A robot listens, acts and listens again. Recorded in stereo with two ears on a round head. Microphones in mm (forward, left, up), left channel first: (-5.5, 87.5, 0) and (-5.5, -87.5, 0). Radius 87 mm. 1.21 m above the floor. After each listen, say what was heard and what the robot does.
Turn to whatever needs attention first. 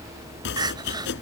The crying: about 20° right or 160° right. Turn 20° right.
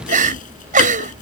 So it is at 135° right. Turn 135° right.
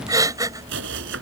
The crying is now 20° right. Turn 20° right.
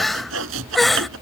Facing the crying.